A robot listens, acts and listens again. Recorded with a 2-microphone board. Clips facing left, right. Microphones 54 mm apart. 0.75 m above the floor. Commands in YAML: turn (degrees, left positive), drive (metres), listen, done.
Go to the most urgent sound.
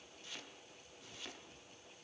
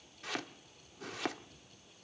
listen: true
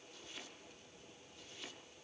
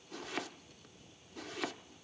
listen: true
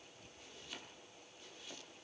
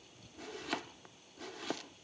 done: "I can't make out anything urgent, only chopping."